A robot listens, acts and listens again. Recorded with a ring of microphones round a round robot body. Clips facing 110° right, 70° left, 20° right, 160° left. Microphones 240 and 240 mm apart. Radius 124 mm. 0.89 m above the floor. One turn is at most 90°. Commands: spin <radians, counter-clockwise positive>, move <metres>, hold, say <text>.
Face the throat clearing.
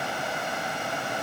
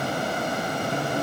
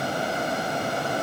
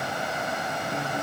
hold
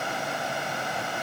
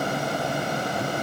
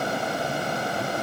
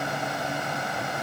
hold
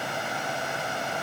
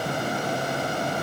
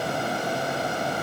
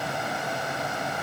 say I can't make out throat clearing to turn to.